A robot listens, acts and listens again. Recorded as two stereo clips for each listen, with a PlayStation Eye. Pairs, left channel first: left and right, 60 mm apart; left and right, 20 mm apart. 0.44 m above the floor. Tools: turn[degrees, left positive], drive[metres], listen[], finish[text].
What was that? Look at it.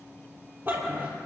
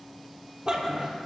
Thought: The dog barking: about 40° right or 140° right.
Action: turn[-40]
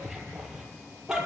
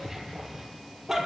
Thought: So it is at 10° right.
Action: turn[-10]
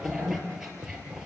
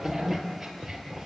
Thought: The dog barking is now 10° right.
Action: turn[-10]
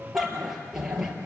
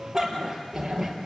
Thought: The dog barking is now 10° right.
Action: turn[-10]
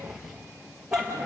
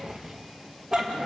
Thought: The dog barking is now 10° right.
Action: turn[-10]
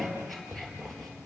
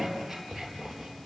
Action: finish[Facing the dog barking, over 4 m away.]